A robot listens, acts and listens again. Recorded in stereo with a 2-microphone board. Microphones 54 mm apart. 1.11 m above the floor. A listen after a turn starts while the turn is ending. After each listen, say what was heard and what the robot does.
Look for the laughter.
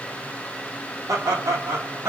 The laughter: about 65° right or 115° right. Turn 65° right.
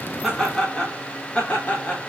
So it is at 30° left. Turn 30° left.
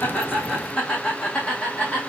The laughter is now 20° left. Turn 20° left.
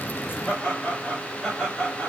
The laughter is now 15° left. Turn 15° left.
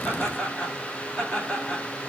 Facing the laughter.